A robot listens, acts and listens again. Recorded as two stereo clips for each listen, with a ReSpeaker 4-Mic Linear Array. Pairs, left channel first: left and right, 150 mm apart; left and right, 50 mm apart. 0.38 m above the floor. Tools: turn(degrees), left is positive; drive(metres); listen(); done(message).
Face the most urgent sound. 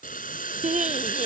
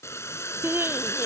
turn(degrees=-50)
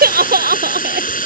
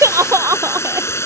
turn(degrees=-80)
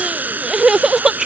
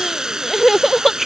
done("Facing the crying.")